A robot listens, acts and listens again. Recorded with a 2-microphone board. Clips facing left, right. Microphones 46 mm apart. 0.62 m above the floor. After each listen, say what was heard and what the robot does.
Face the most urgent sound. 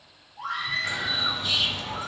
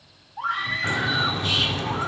The scream: about 65° right or 115° right. Turn 65° right.
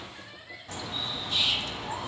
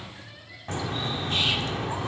Keep listening.
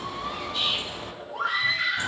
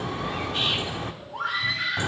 So it is at 10° right. Turn 10° right.
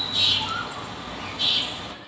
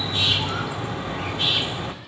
Keep listening.
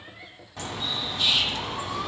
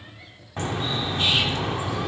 Keep listening.
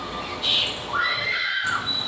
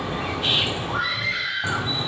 Found it: a scream, straight ahead.